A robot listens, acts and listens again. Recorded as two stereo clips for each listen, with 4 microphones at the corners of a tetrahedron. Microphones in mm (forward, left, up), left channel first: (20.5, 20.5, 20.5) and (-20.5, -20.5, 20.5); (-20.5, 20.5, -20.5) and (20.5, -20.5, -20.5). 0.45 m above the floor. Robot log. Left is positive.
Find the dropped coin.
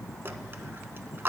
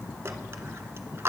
note: The dropped coin: 85° right.
cmd yaw -85
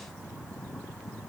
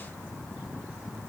end: Facing where the dropped coin came from. I can't hear it now.